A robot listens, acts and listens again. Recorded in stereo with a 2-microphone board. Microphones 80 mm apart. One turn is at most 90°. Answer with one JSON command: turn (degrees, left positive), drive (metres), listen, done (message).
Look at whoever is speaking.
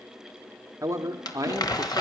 {"turn": -40}
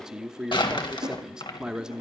{"turn": -10}
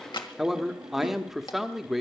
{"done": "Found it: a man speaking, straight ahead, 1 to 2 m away."}